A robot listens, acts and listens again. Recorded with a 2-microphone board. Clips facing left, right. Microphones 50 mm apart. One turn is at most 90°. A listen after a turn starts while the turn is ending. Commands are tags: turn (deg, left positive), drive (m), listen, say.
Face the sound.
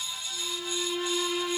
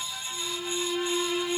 <turn deg="-30"/>
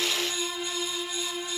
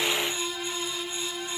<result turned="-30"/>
<turn deg="20"/>
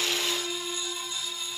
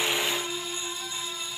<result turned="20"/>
<say>Found it: a violin, straight ahead, 1 to 2 m away.</say>